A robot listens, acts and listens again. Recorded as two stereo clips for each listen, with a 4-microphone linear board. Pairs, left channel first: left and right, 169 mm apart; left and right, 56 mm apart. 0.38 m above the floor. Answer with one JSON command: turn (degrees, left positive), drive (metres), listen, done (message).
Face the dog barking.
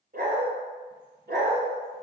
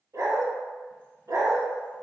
{"turn": -90}
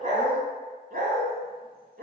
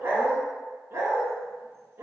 {"turn": -75}
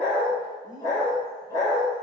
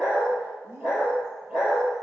{"turn": -15}
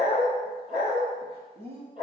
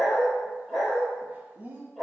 {"done": "Facing the dog barking, 2 to 4 m away."}